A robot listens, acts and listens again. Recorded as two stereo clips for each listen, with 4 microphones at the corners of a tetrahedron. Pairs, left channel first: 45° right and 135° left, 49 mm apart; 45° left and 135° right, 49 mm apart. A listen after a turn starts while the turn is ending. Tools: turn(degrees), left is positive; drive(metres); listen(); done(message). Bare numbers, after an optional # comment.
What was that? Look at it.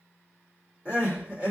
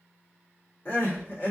# The crying: 75° left.
turn(75)
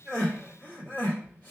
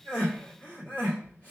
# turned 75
done("Found it: crying, straight ahead.")